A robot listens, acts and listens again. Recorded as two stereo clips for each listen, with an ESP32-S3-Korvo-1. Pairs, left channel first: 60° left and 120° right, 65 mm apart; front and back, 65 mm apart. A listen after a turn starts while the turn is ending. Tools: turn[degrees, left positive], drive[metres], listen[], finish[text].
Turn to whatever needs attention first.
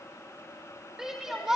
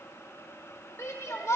Thought: The shout: 40° right.
Action: turn[-40]
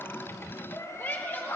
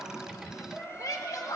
Action: finish[Facing the shout, 1 to 2 m away.]